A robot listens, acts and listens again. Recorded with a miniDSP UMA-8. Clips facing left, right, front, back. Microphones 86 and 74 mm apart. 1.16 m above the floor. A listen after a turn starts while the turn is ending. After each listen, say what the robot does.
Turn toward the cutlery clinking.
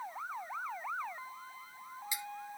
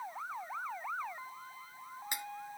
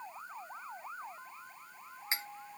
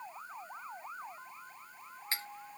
Turn 70° right.
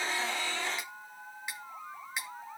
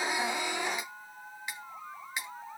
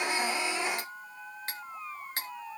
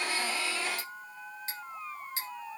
Facing the cutlery clinking, under 1 m away.